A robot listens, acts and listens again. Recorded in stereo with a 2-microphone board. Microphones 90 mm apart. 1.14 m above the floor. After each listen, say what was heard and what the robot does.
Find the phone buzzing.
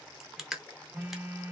The phone buzzing: about 20° right or 160° right. Turn 20° right.
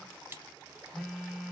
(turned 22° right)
Found it: a phone buzzing, straight ahead, 1 to 2 m away.